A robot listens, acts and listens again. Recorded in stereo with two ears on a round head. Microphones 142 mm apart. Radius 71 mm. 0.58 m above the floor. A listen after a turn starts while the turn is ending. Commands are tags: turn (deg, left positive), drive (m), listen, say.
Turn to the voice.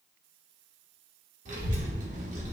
<turn deg="-50"/>
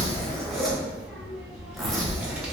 <turn deg="-10"/>
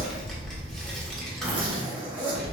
<say>Found it: a child speaking, straight ahead.</say>